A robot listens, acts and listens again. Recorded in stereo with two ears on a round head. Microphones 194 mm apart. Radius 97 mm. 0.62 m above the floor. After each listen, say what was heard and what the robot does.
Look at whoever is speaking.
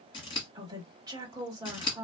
The woman speaking: about 20° right or 160° right. Turn 20° right.
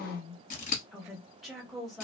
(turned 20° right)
Found it: a woman speaking, straight ahead, 1 to 2 m away.